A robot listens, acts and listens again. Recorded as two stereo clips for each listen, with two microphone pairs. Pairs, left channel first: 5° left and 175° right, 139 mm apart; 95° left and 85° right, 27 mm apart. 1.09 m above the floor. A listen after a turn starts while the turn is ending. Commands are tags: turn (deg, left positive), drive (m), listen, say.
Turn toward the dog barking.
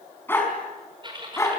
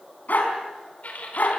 <turn deg="75"/>
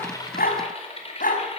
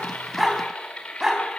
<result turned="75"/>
<turn deg="-10"/>
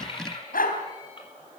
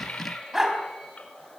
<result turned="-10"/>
<say>Found it: a dog barking, straight ahead, 2 to 4 m away.</say>